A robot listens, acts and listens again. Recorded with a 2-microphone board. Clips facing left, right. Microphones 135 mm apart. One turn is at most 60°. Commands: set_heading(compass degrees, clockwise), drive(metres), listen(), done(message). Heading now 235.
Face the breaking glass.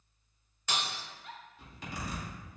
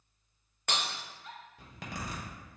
set_heading(290)
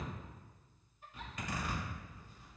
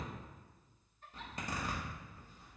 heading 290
listen()
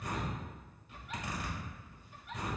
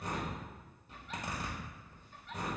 done("I heard breaking glass, but can't make it out now. It was about straight ahead or 70° right.")